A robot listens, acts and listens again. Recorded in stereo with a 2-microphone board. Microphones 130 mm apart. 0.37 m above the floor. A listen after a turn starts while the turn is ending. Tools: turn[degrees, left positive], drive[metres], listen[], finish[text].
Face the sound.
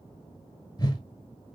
Thought: The whoosh: about 30° left or 150° left.
Action: turn[30]
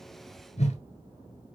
Thought: So it is at 120° left.
Action: turn[120]
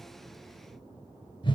Thought: The whoosh is now 40° left.
Action: turn[40]
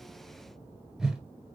Action: finish[Facing the whoosh, 1 to 2 m away.]